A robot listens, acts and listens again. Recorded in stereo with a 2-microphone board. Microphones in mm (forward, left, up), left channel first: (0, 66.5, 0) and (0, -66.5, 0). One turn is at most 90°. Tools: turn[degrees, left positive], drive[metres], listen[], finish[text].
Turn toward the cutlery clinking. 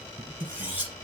Thought: The cutlery clinking: about 15° right or 165° right.
Action: turn[-15]
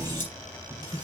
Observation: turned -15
Action: listen[]
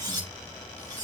Thought: So it is at 145° right.
Action: turn[-90]
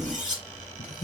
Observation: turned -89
Thought: The cutlery clinking is now 60° right.
Action: turn[-60]
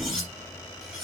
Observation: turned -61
Action: finish[Facing the cutlery clinking, over 4 m away.]